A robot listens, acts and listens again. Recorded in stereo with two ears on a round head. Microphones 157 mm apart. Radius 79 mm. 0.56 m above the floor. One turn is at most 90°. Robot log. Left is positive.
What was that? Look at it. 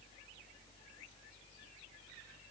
cmd idle
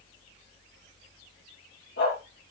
note: The dog barking: about 70° left or 110° left.
cmd yaw +70
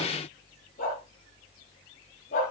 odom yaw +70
note: So it is at 45° left.
cmd yaw +45
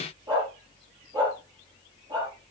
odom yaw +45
note: The dog barking is now 25° right.
cmd yaw -25
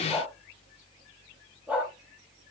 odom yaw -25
note: The dog barking is now 10° right.
cmd yaw -10
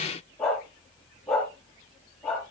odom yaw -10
end: Facing the dog barking, over 4 m away.